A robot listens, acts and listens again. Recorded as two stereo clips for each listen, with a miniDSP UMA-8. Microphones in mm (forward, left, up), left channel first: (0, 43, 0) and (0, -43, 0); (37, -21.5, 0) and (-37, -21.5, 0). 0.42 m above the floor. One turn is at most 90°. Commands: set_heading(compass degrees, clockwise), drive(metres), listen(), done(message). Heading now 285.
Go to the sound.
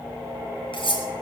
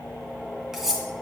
set_heading(195)
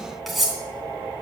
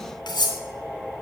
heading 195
drive(1.0)
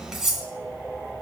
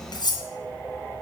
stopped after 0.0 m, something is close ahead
done("Blocked. The cutlery clinking is further on, straight ahead.")